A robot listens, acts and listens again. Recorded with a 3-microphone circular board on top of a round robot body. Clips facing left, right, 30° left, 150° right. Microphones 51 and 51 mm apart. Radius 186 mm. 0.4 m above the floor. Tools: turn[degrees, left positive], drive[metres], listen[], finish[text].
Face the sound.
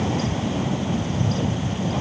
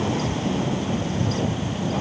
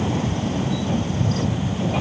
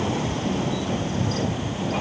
Action: listen[]
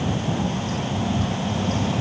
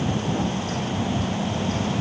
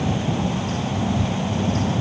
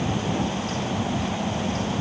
Action: listen[]
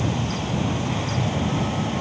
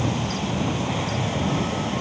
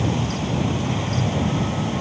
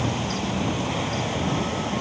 Action: finish[I can't make out anything to turn to.]